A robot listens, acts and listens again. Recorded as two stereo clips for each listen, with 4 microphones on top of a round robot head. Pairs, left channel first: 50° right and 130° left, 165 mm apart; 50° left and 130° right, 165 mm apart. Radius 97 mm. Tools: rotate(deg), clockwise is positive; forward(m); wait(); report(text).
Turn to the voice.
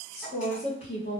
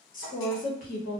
report("Facing the woman speaking, 1 to 2 m away.")